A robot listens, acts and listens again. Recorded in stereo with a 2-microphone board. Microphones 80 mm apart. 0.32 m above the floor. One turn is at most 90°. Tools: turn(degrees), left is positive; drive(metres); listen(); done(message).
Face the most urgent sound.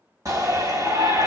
turn(degrees=-45)
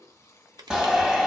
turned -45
turn(degrees=-10)
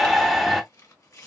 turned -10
done("Found it: a shout, straight ahead.")